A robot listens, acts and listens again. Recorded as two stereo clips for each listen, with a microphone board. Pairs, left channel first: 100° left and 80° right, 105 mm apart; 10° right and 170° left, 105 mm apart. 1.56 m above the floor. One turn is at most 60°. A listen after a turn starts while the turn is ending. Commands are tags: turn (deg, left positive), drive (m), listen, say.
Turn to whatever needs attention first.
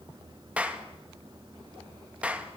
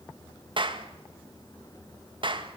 <listen/>
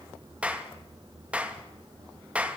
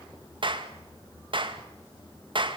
<listen/>
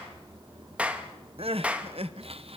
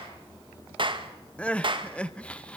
<turn deg="-60"/>
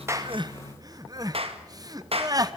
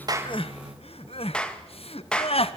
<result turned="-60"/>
<turn deg="-25"/>
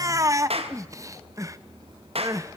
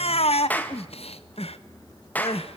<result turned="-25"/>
<turn deg="-20"/>
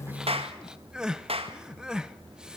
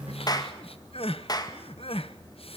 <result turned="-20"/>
<say>Facing the crying.</say>